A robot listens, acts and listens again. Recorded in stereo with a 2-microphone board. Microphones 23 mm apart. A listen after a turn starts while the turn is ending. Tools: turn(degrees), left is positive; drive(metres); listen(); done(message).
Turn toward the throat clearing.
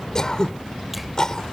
turn(degrees=30)
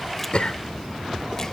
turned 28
listen()
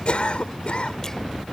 turn(degrees=115)
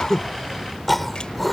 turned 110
done("Facing the throat clearing.")